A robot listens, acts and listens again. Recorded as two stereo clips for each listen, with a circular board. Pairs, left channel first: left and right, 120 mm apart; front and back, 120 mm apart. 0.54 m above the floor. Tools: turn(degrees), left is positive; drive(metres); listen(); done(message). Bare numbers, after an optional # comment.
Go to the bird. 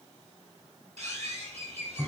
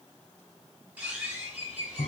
# The bird: 105° right.
turn(-105)
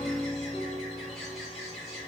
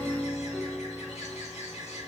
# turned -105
drive(1.0)
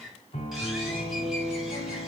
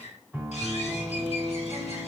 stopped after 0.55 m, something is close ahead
done("Something is in my way. I am facing the bird but have not reached it.")